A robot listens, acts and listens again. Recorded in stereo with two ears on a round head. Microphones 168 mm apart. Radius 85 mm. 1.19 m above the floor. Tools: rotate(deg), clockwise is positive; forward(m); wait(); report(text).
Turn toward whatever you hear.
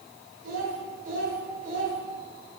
rotate(45)
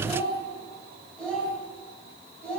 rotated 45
report("Facing the child speaking.")